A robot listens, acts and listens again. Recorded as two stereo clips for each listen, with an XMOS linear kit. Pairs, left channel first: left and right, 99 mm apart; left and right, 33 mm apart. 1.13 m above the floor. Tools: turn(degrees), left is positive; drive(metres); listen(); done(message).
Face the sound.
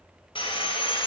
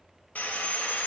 turn(degrees=55)
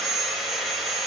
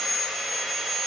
done("Found it: sawing, straight ahead.")